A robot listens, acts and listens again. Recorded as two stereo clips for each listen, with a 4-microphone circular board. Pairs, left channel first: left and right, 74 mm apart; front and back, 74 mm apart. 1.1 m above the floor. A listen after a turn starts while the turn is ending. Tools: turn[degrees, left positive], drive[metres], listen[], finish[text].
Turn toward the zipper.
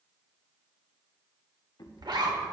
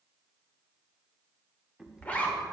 Thought: The zipper: 70° right.
Action: turn[-70]
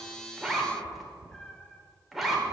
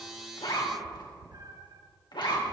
Action: finish[Facing the zipper.]